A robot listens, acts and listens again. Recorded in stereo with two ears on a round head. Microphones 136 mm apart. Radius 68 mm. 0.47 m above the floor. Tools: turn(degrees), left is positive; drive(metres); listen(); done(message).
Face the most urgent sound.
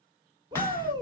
turn(degrees=-30)
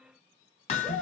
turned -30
done("Facing the shout.")